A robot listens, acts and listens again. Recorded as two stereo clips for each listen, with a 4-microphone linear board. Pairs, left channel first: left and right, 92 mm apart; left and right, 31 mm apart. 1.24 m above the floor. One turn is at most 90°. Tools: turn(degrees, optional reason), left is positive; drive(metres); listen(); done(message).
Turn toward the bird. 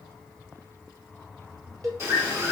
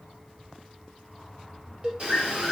turn(degrees=-30, reason="The bird: about 30° right or 150° right.")
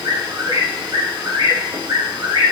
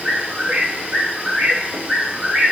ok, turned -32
turn(degrees=-90, reason="So it is at 115° right.")
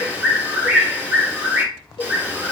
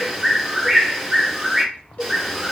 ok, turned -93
turn(degrees=-25, reason="The bird is now 25° right.")
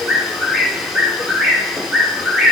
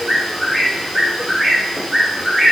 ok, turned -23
done("Facing the bird.")